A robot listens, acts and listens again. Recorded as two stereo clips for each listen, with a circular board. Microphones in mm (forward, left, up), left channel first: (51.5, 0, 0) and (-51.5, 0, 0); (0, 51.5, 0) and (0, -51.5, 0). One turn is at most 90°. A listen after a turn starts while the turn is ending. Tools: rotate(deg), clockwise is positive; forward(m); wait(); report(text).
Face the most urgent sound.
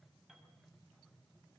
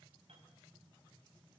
wait()
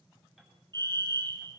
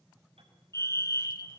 rotate(-90)
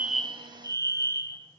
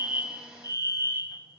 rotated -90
rotate(-50)
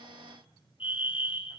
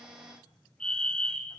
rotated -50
rotate(-10)
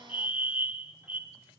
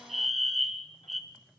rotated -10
report("Facing the fire alarm, 1 to 2 m away.")